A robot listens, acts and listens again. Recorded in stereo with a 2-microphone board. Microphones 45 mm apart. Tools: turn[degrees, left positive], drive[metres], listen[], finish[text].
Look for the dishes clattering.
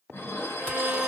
Thought: The dishes clattering: about 60° left or 120° left.
Action: turn[60]
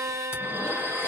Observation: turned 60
Thought: So it is at 50° left.
Action: turn[50]
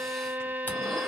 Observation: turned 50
Action: listen[]
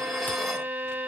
Action: listen[]
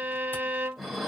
Action: finish[Found it: dishes clattering, straight ahead, 1 to 2 m away.]